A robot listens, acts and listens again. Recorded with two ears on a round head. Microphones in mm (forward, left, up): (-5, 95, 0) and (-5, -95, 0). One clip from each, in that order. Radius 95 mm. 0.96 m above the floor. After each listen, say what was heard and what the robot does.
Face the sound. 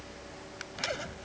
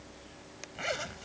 The zipper: about 25° right or 155° right. Turn 25° right.
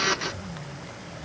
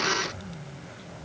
Found it: a zipper, straight ahead.